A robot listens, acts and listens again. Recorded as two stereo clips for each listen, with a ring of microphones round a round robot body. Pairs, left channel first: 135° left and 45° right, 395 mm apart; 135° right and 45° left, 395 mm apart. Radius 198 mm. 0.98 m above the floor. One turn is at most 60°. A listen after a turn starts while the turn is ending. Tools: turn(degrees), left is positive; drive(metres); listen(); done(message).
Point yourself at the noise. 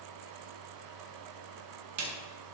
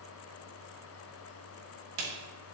turn(degrees=10)
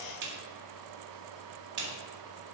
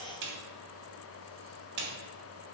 done("Found it: a snare drum, straight ahead.")